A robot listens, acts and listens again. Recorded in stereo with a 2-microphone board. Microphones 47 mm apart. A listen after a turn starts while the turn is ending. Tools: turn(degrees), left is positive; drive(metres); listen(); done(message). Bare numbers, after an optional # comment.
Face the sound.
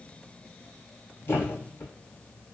# The thud: about 55° left or 125° left.
turn(55)
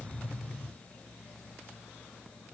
listen()
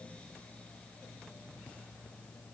done("I heard a thud, but can't make it out now. It was about straight ahead or 70° left.")